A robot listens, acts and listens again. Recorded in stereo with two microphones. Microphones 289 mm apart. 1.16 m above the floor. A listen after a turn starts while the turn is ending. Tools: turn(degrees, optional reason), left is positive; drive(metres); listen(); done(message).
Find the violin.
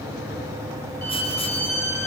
turn(degrees=65, reason="The violin: about 65° left or 115° left.")
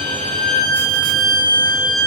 turn(degrees=50, reason="So it is at 50° left.")
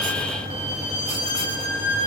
turn(degrees=25, reason="The violin is now 25° left.")
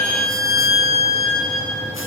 done("Found it: a violin, straight ahead.")